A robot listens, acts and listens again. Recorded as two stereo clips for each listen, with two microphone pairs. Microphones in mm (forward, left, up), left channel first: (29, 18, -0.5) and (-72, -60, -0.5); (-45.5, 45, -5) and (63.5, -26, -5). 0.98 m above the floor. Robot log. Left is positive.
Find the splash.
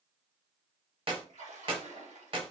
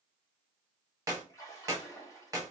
note: The splash: 150° right.
cmd yaw -150
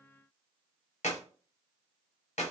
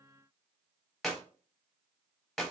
end: Facing where the splash came from. I can't hear it now.